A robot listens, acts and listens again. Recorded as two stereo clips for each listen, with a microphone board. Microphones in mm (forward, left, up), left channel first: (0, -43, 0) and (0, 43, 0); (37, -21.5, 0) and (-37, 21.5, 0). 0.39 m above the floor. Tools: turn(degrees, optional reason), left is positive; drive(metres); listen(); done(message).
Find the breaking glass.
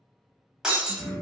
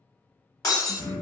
turn(degrees=10, reason="The breaking glass: 10° left.")
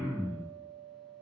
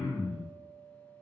done("Facing where the breaking glass came from. I can't hear it now.")